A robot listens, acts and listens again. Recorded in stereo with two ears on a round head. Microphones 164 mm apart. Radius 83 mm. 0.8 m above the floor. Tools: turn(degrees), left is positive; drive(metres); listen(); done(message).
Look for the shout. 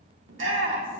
turn(degrees=-90)
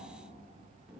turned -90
done("Found it: a shout, straight ahead, 1 to 2 m away.")